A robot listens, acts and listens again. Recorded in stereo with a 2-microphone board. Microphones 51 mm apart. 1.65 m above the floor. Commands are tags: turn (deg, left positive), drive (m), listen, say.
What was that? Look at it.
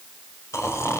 <turn deg="70"/>
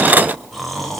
<say>Facing the snoring, over 4 m away.</say>